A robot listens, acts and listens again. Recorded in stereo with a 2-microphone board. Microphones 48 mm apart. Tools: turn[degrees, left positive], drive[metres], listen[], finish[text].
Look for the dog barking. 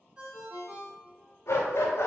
Thought: The dog barking: about 65° left or 115° left.
Action: turn[65]
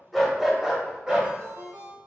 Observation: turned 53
Thought: So it is at 15° right.
Action: turn[-15]
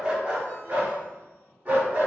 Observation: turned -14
Thought: The dog barking is now 35° right.
Action: turn[-35]
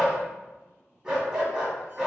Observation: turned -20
Thought: The dog barking is now 15° right.
Action: turn[-15]
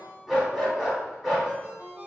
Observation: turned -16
Action: finish[Facing the dog barking, 1 to 2 m away.]